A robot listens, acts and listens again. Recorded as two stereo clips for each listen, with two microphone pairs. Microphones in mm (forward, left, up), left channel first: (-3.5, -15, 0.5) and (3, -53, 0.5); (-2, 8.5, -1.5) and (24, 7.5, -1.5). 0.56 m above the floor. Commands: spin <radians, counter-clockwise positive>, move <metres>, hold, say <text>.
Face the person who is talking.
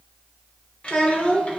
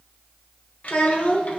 spin 2.79
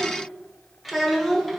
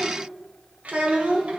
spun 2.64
spin 0.17
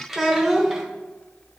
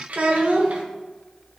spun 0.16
say Found it: a child speaking, straight ahead.